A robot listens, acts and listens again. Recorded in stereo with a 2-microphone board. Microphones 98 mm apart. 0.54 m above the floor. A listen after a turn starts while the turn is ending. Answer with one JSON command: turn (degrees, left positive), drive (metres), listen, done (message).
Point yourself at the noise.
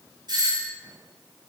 {"turn": -50}
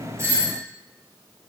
{"listen": true}
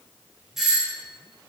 {"done": "Facing the doorbell, 2 to 4 m away."}